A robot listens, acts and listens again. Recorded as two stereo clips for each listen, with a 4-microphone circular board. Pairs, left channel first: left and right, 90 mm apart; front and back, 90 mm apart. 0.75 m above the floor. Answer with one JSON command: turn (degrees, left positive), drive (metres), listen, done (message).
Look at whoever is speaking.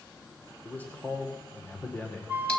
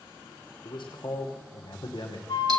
{"turn": 20}
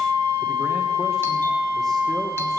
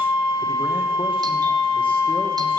{"listen": true}
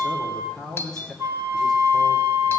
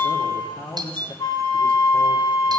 {"done": "Facing the man speaking."}